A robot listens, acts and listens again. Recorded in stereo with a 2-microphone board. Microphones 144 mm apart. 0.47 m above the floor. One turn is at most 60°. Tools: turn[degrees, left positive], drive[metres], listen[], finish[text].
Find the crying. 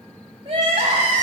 Thought: The crying: about 40° right or 140° right.
Action: turn[-40]
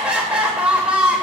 Thought: So it is at 10° right.
Action: turn[-10]
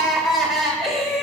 Action: finish[Found it: crying, straight ahead, 1 to 2 m away.]